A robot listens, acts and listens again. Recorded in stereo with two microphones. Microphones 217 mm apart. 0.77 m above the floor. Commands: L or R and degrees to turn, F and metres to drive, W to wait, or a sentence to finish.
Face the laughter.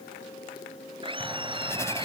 R25
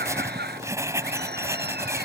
R130
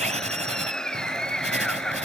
Found it: laughter, straight ahead.